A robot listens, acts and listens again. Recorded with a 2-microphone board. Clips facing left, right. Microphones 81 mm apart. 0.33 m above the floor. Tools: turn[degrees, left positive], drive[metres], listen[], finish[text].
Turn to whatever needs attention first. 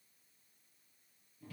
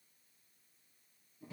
Action: listen[]
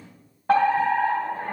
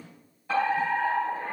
Thought: The fire alarm: about 55° left or 125° left.
Action: turn[55]
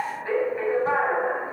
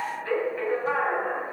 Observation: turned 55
Thought: So it is at 25° left.
Action: turn[25]
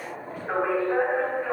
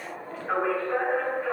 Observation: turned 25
Thought: The fire alarm is now 15° left.
Action: turn[15]
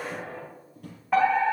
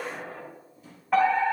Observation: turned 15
Action: finish[Facing the fire alarm.]